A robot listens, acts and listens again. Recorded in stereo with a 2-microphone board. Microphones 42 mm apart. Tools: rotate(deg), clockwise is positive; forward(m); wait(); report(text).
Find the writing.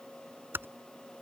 wait()
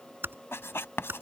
rotate(-70)
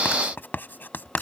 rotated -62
rotate(-50)
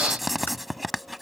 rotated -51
report("Found it: writing, straight ahead.")